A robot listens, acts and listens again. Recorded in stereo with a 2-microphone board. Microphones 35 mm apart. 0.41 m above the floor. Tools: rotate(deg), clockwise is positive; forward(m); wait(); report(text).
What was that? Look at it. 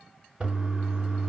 rotate(25)
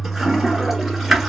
report("Facing the toilet flushing, 1 to 2 m away.")